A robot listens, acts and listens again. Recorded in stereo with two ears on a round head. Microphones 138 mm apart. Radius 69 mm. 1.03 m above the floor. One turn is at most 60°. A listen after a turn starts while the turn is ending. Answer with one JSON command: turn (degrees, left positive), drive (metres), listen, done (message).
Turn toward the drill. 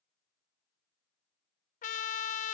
{"listen": true}
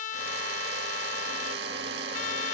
{"turn": -60}
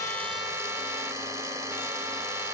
{"turn": -20}
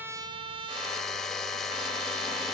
{"done": "Found it: a drill, straight ahead."}